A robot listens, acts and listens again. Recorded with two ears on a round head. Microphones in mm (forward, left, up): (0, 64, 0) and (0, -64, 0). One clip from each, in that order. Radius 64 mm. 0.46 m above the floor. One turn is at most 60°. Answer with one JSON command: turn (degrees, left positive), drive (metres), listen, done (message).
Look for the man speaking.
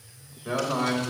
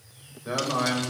{"turn": -30}
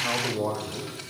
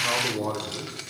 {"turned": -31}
{"turn": -60}
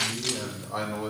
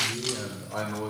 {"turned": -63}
{"turn": -10}
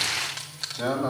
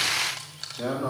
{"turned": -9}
{"turn": 15}
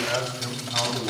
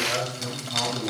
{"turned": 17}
{"turn": 10}
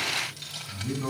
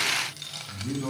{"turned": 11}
{"done": "Facing the man speaking, 2 to 4 m away."}